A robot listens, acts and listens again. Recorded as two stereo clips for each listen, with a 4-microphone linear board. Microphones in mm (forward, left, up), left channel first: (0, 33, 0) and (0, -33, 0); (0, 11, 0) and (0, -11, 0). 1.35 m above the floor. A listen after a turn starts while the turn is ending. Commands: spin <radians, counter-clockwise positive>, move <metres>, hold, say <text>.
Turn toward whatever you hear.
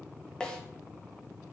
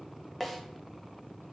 spin 0.52
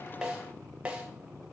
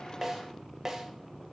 spin -0.26
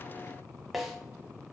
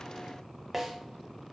say Found it: a snare drum, straight ahead, 1 to 2 m away.